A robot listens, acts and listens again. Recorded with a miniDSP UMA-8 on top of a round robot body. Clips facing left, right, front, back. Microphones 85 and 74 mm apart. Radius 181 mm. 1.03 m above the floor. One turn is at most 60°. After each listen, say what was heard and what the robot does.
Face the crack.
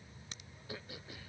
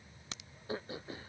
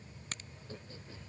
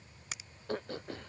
The crack: 95° right. Turn 60° right.
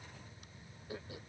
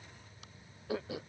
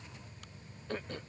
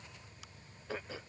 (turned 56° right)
Nothing new. It was at 40° right. Turn 40° right.
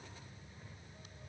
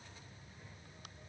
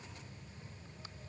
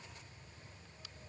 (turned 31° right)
Nothing new. It was at 10° right. Turn 10° right.
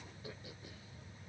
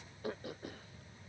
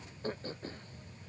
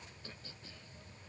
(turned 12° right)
I heard a crack from this way, but can't make it out now.